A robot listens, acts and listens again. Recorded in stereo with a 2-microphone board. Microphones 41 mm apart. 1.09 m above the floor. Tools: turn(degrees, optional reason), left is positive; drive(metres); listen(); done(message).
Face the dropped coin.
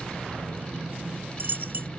turn(degrees=-60, reason="The dropped coin: about 60° right or 120° right.")
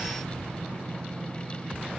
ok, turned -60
listen()
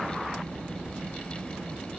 done("I heard a dropped coin, but can't make it out now. It was about straight ahead or 60° right.")